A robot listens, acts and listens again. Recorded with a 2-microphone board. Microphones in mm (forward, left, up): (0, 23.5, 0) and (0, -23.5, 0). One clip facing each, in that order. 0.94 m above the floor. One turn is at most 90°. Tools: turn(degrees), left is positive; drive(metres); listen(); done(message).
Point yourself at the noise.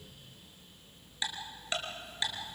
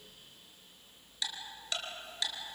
turn(degrees=25)
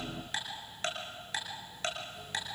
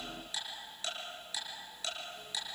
turn(degrees=90)
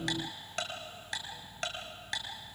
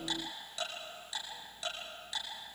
turn(degrees=60)
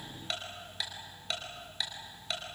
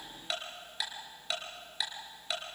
done("Found it: ticking, straight ahead.")